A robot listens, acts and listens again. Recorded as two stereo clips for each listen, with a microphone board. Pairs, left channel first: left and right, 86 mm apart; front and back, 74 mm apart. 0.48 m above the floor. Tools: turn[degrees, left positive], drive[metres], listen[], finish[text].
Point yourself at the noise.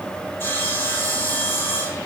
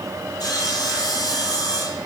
Thought: The sawing: 30° left.
Action: turn[30]
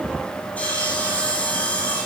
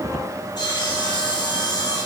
Thought: The sawing is now 15° left.
Action: turn[15]
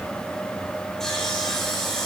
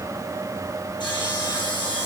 Action: finish[Facing the sawing, over 4 m away.]